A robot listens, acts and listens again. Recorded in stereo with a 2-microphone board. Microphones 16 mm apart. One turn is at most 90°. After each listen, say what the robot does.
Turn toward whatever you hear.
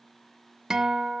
Turn 35° right.
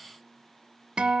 Turn 90° right.
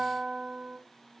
Turn 30° right.
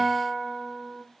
Facing the guitar.